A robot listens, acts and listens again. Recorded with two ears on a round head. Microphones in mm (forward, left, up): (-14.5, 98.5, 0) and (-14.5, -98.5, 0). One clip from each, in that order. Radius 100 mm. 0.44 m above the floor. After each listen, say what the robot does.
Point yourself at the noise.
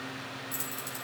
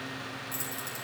Turn 30° left.
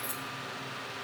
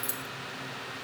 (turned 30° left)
Turn 25° right.
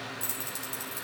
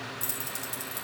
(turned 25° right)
Facing the keys jangling, 2 to 4 m away.